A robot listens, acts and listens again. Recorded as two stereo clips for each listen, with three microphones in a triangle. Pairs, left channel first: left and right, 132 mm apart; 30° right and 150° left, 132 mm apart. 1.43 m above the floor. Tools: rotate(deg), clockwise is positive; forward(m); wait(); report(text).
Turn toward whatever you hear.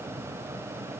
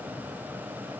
wait()
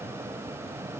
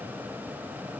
wait()
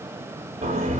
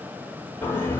rotate(105)
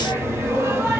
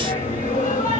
rotate(20)
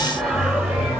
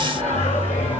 report("Found it: singing, straight ahead, over 4 m away.")